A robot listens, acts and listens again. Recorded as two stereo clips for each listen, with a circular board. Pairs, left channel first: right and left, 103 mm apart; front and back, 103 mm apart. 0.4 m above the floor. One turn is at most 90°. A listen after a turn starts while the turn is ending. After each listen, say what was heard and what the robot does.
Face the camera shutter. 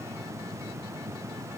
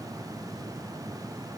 Keep listening.
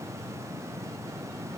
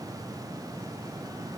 Keep listening.
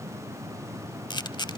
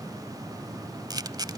The camera shutter: 130° right. Turn 90° right.
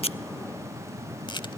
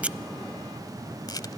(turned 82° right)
The camera shutter is now 50° right. Turn 50° right.
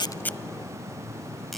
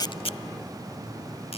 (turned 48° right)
Keep listening.
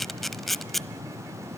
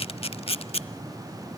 Found it: a camera shutter, straight ahead.